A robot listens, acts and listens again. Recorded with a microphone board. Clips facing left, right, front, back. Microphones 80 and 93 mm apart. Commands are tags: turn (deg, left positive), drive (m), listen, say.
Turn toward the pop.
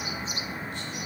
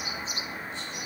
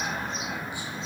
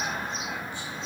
<listen/>
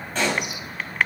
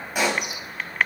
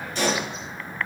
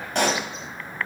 <turn deg="-165"/>
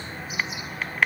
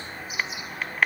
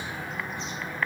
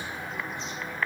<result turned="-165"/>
<say>Facing where the pop came from. I can't hear it now.</say>